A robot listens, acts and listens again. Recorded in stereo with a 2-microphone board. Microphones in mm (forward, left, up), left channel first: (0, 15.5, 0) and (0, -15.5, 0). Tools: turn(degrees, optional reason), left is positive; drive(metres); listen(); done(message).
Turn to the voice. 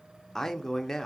turn(degrees=30)
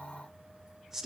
turn(degrees=-15, reason="So it is at 15° right.")
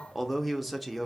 done("Found it: a man speaking, straight ahead, under 1 m away.")